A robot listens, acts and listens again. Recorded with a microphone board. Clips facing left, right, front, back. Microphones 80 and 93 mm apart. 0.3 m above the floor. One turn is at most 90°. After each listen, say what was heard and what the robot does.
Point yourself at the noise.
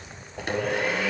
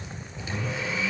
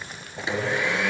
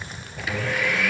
The blender: 65° left. Turn 65° left.
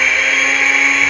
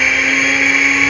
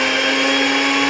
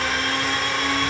Facing the blender.